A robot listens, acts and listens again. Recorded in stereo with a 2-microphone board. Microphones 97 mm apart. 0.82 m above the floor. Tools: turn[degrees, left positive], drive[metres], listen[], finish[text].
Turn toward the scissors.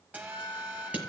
Thought: The scissors: about 15° right or 165° right.
Action: turn[-15]
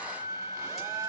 Action: listen[]
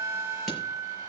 Action: listen[]
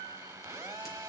Action: finish[I heard scissors, but can't make it out now. It was about straight ahead or 150° right.]